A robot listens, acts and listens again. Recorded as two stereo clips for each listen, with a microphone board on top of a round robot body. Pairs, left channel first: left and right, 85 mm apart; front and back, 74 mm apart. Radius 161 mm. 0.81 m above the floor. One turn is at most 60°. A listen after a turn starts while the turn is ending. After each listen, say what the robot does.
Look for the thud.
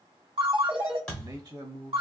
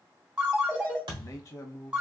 Turn 60° left.
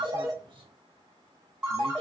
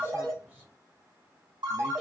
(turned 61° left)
Turn 60° left.
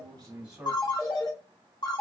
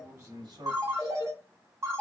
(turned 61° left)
Turn 50° left.
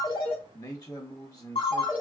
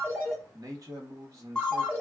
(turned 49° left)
Facing where the thud came from. I can't hear it now.